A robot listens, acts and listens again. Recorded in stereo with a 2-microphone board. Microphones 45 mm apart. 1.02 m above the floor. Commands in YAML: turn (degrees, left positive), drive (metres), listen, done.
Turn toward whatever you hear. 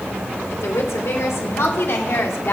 turn: 65
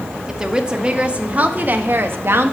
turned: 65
turn: -65
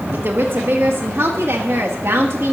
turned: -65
turn: -70
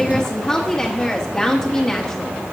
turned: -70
turn: 10
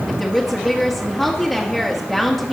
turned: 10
done: "Found it: a woman speaking, straight ahead, 1 to 2 m away."